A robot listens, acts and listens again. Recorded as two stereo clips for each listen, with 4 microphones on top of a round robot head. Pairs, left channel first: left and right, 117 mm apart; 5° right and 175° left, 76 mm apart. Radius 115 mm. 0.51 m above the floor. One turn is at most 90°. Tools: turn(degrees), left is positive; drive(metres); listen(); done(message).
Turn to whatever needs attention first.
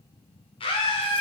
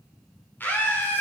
turn(degrees=60)
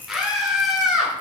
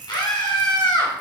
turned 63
done("Found it: a scream, straight ahead, 1 to 2 m away.")